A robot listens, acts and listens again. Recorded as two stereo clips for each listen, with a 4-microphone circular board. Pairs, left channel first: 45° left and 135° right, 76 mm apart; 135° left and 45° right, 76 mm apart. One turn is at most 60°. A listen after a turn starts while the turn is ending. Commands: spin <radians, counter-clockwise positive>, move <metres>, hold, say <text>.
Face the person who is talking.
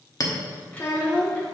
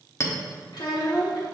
spin 1.05
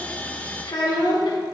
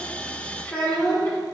spin 1.05
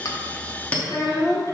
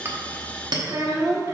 say Facing the child speaking.